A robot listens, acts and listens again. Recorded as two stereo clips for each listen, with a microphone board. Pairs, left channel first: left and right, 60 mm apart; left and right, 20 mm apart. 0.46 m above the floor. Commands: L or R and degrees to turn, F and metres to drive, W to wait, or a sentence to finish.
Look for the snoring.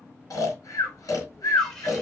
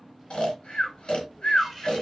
L90
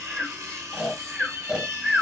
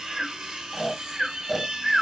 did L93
R15
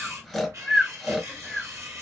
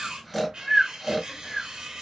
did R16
Facing the snoring.